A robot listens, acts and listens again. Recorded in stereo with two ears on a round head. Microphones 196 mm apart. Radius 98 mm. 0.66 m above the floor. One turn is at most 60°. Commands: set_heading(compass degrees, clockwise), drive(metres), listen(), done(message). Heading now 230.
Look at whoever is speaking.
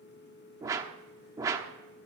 listen()
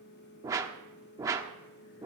listen()
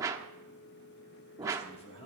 set_heading(205)
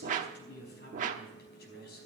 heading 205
set_heading(145)
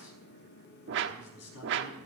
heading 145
set_heading(85)
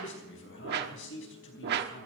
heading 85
set_heading(25)
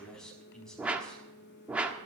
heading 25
done("Found it: a man speaking, straight ahead, over 4 m away.")